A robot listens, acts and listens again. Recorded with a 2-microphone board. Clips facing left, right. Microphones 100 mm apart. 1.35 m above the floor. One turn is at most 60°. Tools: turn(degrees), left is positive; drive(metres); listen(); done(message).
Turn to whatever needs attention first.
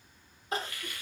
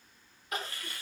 turn(degrees=30)
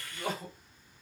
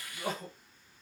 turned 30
done("Facing the crying, 1 to 2 m away.")